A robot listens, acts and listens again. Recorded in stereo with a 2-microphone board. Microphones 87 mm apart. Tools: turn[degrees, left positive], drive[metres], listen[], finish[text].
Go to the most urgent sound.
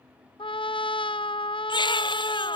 Thought: The baby crying: about 65° left or 115° left.
Action: turn[65]
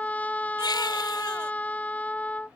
Thought: So it is at 50° left.
Action: turn[50]
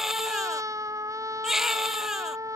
Action: drive[1.0]
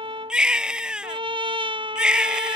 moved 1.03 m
Thought: The baby crying is now 10° right.
Action: turn[-10]
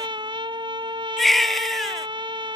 Action: drive[1.0]
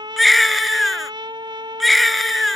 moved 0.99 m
Action: drive[1.0]
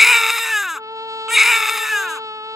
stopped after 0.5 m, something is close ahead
Action: finish[Arrived at the baby crying, straight ahead.]